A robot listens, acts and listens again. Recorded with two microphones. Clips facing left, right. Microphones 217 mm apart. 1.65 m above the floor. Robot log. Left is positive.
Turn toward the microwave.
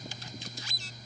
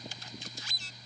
cmd idle
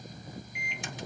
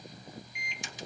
note: The microwave: about 55° left or 125° left.
cmd yaw +55
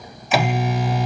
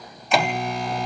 end: Found it: a microwave, straight ahead.